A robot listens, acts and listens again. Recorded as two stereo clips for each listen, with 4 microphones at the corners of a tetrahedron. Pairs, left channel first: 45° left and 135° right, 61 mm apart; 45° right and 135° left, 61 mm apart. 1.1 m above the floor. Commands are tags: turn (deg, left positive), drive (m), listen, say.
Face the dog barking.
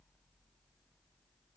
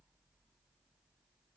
<listen/>
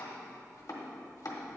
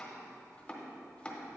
<listen/>
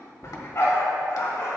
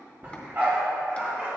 <turn deg="80"/>
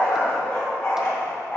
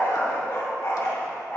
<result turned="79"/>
<say>Found it: a dog barking, straight ahead, 2 to 4 m away.</say>